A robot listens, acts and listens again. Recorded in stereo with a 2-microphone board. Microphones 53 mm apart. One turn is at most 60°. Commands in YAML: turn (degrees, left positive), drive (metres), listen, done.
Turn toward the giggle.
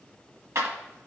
listen: true
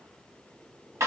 listen: true
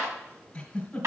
turn: 20
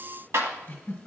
turn: 60
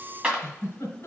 turn: 60
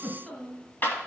turn: 15
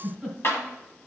done: "Found it: a giggle, straight ahead."